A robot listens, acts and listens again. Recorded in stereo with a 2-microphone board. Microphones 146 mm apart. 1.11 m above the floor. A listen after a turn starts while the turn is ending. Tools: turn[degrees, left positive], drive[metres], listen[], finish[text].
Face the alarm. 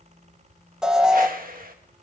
Action: turn[-30]
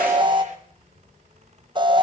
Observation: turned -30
Thought: So it is at 145° right.
Action: turn[-145]
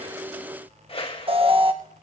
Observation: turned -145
Thought: The alarm is now 45° right.
Action: turn[-45]
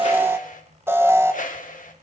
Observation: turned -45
Thought: The alarm is now 20° right.
Action: turn[-20]
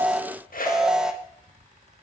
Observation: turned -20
Action: finish[Found it: an alarm, straight ahead.]